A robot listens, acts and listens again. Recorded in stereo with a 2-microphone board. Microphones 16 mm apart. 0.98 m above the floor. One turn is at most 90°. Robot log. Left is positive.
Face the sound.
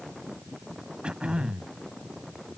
cmd yaw -90
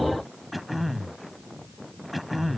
end: Found it: throat clearing, straight ahead.